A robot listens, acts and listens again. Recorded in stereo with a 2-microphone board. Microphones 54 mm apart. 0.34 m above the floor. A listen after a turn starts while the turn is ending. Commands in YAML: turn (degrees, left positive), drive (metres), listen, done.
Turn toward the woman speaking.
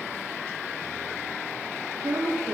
turn: -90
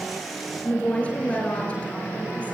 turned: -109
turn: 25
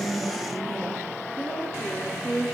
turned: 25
done: "Found it: a woman speaking, straight ahead."